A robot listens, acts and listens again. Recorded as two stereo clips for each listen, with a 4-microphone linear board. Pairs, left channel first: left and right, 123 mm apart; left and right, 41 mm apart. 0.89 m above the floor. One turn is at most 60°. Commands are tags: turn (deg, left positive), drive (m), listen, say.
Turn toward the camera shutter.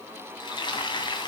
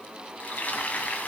<listen/>
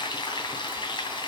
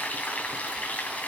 <listen/>
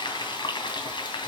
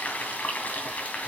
<say>I can't make out a camera shutter to turn to.</say>